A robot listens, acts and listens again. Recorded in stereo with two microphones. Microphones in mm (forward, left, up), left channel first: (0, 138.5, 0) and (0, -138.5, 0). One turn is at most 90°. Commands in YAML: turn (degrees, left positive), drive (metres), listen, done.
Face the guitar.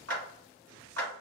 listen: true
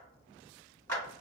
listen: true
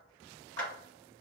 done: "I can't make out a guitar, only a clap."